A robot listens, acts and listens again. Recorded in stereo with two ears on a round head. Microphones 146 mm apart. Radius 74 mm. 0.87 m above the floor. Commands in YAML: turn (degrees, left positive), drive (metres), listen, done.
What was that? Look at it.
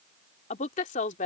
turn: 50
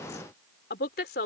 turn: 60
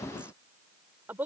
turn: -10
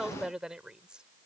done: "Found it: a woman speaking, straight ahead."